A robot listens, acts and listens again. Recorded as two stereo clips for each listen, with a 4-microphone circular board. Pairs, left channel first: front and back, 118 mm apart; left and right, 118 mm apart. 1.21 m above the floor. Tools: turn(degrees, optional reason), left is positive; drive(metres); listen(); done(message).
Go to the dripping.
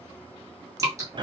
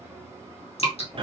turn(degrees=120, reason="The dripping: 120° left.")
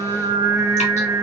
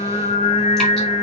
listen()
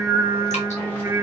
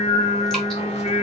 listen()
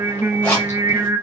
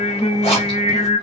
done("I heard dripping from this way, but can't make it out now. I did not reach it.")